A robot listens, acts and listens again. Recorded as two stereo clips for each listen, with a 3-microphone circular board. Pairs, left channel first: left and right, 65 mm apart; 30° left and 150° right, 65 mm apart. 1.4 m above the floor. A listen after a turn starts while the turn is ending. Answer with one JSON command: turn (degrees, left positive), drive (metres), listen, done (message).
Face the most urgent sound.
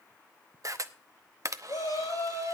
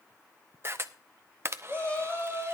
{"turn": 100}
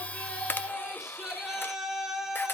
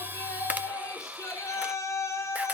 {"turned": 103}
{"done": "Facing the shout."}